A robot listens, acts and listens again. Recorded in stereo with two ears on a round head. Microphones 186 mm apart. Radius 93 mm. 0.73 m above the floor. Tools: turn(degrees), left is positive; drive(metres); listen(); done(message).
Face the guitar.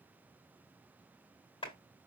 listen()
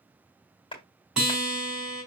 turn(degrees=-30)
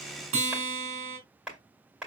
turn(degrees=-145)
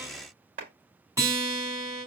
turn(degrees=-15)
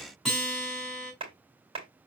done("Found it: a guitar, straight ahead, 2 to 4 m away.")